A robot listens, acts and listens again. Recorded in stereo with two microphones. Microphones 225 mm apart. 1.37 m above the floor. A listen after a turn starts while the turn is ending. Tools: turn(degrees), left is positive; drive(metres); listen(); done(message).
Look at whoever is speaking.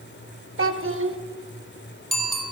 turn(degrees=-65)
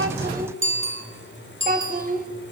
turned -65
turn(degrees=-40)
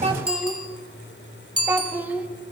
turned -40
turn(degrees=-10)
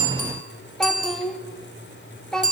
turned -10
done("Found it: a child speaking, straight ahead, 1 to 2 m away.")